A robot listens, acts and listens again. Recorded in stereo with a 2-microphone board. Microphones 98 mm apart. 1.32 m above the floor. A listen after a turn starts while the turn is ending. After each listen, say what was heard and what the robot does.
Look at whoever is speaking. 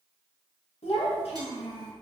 Turn 90° left.
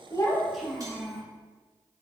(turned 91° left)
Found it: a child speaking, straight ahead, 1 to 2 m away.